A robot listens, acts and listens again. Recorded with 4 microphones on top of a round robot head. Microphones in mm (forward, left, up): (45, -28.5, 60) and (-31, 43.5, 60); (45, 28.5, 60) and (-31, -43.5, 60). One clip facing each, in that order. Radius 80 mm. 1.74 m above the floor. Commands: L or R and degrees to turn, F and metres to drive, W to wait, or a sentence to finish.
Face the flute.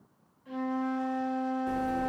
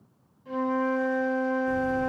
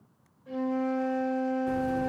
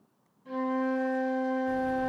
R170
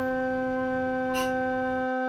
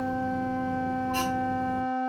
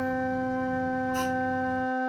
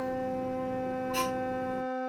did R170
L30
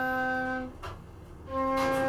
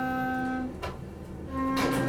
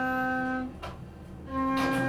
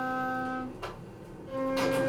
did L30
Facing the flute, 2 to 4 m away.